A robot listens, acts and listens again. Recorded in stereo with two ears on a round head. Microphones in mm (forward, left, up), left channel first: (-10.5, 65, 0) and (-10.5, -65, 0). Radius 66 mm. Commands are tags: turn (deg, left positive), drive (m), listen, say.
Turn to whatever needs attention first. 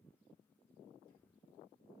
<listen/>
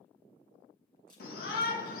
<turn deg="75"/>
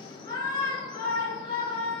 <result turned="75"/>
<turn deg="30"/>
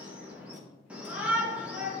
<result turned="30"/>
<turn deg="-10"/>
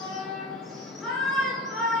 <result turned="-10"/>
<say>Facing the shout, 1 to 2 m away.</say>